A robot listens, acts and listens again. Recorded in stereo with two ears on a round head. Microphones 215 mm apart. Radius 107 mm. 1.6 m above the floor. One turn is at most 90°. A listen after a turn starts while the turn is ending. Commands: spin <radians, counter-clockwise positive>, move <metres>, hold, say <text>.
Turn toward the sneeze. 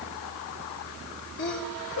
spin 0.87
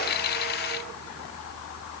hold
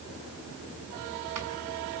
say I heard a sneeze, but can't make it out now. It was about straight ahead or 80° left.